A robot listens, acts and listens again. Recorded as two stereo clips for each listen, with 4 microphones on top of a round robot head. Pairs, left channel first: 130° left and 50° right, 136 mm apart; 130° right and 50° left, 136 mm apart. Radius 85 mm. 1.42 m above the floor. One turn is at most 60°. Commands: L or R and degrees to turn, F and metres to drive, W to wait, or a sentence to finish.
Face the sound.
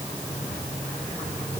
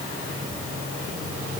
W
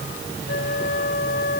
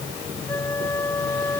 L60
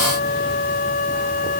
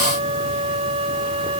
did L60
L60
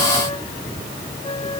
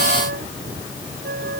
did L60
L60
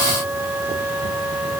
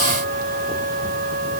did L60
L30
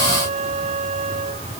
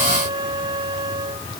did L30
R10
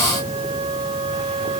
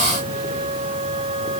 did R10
Facing the flute.